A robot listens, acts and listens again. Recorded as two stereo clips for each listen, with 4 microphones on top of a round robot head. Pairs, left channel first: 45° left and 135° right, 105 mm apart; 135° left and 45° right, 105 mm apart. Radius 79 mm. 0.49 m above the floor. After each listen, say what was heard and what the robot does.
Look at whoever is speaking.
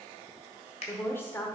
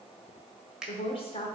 The woman speaking: 115° left. Turn 115° left.
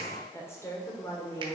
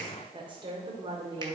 The woman speaking is now 15° right. Turn 15° right.
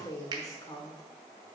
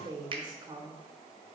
Facing the woman speaking, 1 to 2 m away.